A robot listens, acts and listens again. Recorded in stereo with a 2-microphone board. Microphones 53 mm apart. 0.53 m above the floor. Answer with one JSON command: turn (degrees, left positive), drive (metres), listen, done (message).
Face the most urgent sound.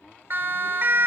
{"turn": -45}
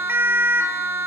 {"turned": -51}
{"turn": -75}
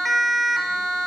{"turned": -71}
{"done": "Found it: a siren, straight ahead, 2 to 4 m away."}